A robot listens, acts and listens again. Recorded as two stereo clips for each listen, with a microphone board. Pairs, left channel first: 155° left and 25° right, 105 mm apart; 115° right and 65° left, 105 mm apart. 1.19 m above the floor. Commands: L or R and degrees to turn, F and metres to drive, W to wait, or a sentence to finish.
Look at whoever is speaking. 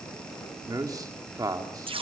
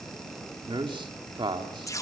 L30
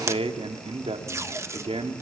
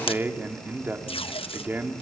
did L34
Found it: a man speaking, straight ahead.